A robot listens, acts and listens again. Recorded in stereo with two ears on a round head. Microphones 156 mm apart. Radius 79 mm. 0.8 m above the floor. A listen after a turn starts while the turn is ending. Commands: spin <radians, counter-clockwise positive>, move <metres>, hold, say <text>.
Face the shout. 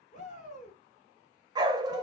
spin 0.79
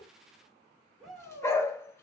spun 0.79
say Facing the shout, 2 to 4 m away.